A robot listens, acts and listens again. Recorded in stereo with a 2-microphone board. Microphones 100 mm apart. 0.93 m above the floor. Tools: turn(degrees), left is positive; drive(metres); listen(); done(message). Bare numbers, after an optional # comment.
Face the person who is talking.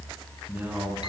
# The man speaking: about 15° right or 165° right.
turn(-15)
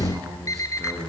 # The man speaking: about 35° right or 145° right.
turn(-35)
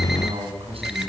# So it is at 110° right.
turn(-110)
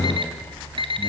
listen()
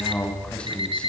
# The man speaking is now 10° left.
turn(10)
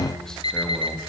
listen()
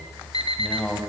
done("Facing the man speaking.")